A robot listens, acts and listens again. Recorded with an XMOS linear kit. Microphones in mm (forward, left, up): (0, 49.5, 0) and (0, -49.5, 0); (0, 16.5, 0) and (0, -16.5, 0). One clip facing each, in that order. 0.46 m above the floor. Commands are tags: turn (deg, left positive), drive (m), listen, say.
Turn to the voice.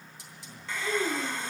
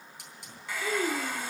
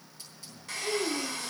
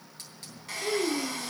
<turn deg="-75"/>
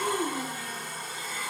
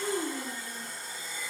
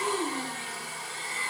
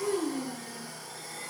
<turn deg="-35"/>
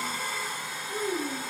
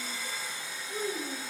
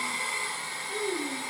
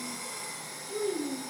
<turn deg="15"/>
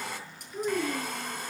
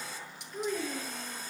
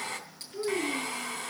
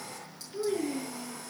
<say>Facing the child speaking.</say>